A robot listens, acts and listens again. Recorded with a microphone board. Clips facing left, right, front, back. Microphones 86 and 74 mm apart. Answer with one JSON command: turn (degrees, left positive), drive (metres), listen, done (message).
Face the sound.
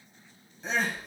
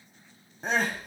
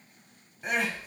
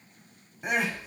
{"turn": -105}
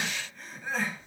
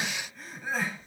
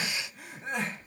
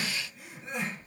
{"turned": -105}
{"done": "Facing the crying."}